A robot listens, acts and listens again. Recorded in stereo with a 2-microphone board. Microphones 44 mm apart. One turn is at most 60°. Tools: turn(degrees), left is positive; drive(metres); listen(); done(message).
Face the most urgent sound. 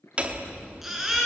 turn(degrees=-30)
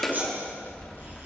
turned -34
listen()
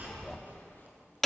listen()
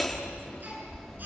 done("I heard a baby crying, but can't make it out now. It was about 25° left or 140° right.")